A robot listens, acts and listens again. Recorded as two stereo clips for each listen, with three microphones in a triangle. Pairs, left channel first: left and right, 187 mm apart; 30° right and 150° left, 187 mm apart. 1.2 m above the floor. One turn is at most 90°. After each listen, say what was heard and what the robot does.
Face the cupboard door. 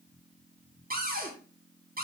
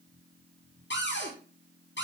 The cupboard door: 50° right. Turn 50° right.
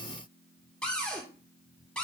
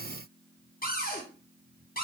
Facing the cupboard door.